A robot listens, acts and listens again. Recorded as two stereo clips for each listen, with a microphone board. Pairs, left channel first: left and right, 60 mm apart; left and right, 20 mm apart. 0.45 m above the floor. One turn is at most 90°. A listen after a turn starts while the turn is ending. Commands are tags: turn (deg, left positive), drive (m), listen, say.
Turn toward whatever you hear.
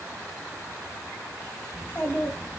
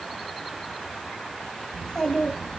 <turn deg="25"/>
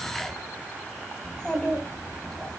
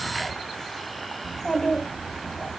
<say>Found it: a child speaking, straight ahead, 2 to 4 m away.</say>